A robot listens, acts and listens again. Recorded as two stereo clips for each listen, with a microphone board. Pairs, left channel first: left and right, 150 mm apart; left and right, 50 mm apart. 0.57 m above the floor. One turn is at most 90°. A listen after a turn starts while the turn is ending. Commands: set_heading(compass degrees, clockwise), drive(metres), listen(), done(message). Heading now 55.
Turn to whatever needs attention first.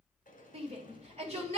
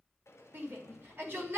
set_heading(100)
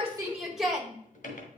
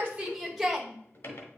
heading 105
done("Found it: a shout, straight ahead.")